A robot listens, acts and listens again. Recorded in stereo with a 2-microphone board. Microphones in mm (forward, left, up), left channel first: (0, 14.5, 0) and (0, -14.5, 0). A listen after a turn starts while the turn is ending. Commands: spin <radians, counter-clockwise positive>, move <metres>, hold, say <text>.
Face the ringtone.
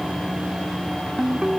spin -0.52
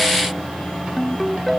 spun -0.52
say Facing the ringtone.